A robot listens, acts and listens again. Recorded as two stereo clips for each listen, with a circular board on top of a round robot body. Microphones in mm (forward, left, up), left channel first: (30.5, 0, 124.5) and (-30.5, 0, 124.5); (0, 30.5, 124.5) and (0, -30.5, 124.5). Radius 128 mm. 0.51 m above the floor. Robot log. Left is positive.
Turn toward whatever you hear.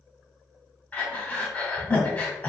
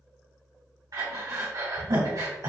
note: The breathing: 60° right.
cmd yaw -60
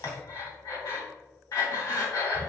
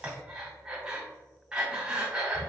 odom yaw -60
note: The breathing is now 15° right.
cmd yaw -15
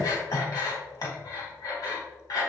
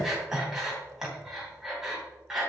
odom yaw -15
end: Found it: breathing, straight ahead.